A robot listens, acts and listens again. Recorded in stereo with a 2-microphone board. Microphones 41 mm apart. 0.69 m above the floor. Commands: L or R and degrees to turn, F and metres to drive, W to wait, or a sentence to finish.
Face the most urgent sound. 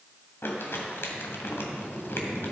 W
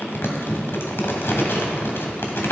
W
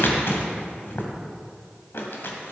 I can't make out anything urgent, only crumpling.